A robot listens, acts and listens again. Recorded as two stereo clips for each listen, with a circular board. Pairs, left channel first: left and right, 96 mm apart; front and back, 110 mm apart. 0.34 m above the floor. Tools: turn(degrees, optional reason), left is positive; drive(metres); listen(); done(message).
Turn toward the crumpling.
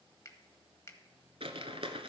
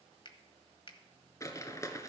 turn(degrees=-65, reason="The crumpling: 65° right.")
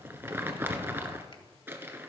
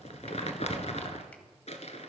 turn(degrees=-20, reason="The crumpling is now 20° right.")
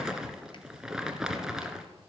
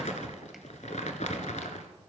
done("Facing the crumpling, 1 to 2 m away.")